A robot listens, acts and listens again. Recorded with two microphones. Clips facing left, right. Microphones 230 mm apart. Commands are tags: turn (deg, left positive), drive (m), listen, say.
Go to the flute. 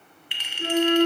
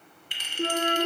<turn deg="-65"/>
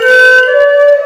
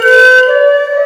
<turn deg="-10"/>
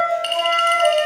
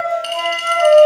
<drive m="1.0"/>
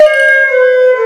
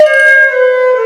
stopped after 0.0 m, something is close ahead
<say>Blocked. The flute is further on, straight ahead.</say>